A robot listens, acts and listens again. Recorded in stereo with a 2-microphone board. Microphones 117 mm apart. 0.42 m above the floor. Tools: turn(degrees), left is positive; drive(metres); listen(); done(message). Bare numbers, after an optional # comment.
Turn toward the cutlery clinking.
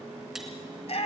listen()
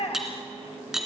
turn(-30)
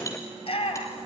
listen()
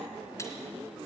listen()
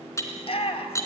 # So it is at 25° left.
turn(25)
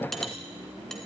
listen()
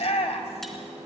listen()
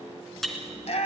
done("Facing the cutlery clinking.")